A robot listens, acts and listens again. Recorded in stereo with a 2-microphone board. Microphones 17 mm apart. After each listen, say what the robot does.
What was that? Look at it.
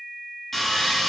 Turn 20° left.
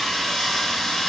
Turn 135° left.
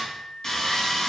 Turn 25° left.
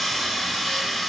Found it: sawing, straight ahead, 2 to 4 m away.